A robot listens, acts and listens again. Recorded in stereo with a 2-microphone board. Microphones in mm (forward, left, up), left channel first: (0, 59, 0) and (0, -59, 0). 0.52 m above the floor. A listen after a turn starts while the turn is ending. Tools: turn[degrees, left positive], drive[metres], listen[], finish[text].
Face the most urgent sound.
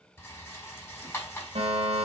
Thought: The fire alarm: about 60° right or 120° right.
Action: turn[-60]
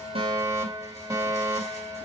Thought: So it is at 30° right.
Action: turn[-30]
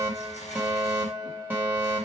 Thought: The fire alarm is now 20° right.
Action: turn[-20]
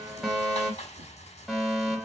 Action: finish[Facing the fire alarm, 2 to 4 m away.]